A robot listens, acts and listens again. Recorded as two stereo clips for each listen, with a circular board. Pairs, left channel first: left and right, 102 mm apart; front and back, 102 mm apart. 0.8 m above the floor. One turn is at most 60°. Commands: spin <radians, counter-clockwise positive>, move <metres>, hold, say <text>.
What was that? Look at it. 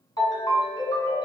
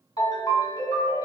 spin 0.79
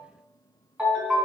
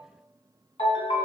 spin -0.17
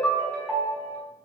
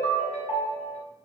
say Found it: a ringtone, straight ahead, 1 to 2 m away.